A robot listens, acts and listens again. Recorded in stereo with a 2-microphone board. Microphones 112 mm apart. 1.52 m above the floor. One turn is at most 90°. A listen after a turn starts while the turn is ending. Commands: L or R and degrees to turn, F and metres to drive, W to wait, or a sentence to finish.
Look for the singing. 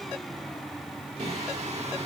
R90
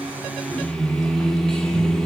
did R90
Facing the singing.